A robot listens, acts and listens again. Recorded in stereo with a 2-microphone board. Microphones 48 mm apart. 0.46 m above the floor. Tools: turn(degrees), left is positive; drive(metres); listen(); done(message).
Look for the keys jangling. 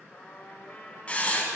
listen()
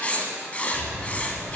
turn(degrees=-45)
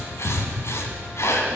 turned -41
done("Found it: keys jangling, straight ahead, 2 to 4 m away.")